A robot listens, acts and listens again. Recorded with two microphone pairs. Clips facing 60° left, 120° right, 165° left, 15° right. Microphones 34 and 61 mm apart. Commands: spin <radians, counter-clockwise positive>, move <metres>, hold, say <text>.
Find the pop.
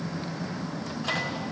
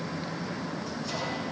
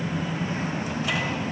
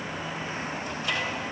hold
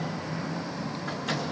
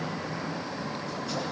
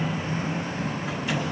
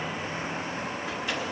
hold
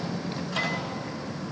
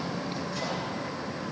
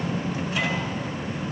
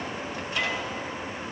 say I can't make out a pop, only a microwave.